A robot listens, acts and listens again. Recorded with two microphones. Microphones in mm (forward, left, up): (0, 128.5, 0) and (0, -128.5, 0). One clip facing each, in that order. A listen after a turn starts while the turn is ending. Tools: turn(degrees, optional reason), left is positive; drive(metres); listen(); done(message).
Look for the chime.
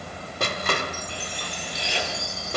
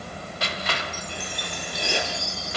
turn(degrees=60, reason="The chime: about 60° left or 120° left.")
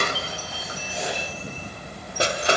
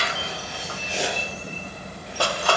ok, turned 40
listen()
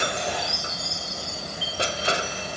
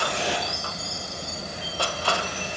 turn(degrees=80, reason="So it is at 80° left.")
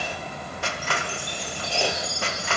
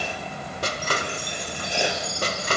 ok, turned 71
done("Found it: a chime, straight ahead.")